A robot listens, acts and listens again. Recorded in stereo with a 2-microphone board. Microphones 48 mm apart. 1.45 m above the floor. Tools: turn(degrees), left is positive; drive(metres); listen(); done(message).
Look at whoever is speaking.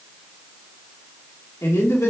turn(degrees=90)
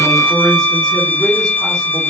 turn(degrees=10)
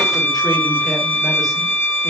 listen()
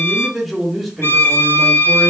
done("Facing the man speaking.")